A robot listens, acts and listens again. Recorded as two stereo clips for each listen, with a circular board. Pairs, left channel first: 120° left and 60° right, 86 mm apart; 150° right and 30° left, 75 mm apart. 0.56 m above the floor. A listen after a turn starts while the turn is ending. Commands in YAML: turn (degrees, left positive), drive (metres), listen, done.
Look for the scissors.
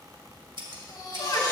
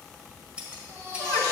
turn: -45
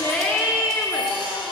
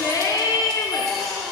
listen: true
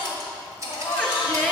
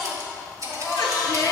turn: -10
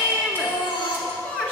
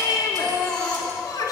listen: true
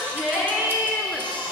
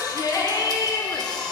listen: true
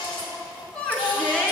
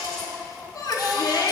done: "I heard scissors from this way, but can't make it out now."